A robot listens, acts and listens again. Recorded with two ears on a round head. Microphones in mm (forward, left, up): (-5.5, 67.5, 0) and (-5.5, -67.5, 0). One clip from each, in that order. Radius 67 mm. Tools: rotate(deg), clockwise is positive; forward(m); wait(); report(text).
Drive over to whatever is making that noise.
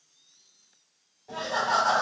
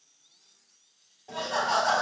rotate(90)
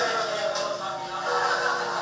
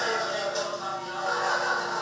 forward(1.0)
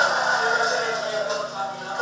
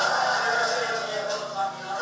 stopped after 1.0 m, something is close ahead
report("Arrived at the laughter, straight ahead.")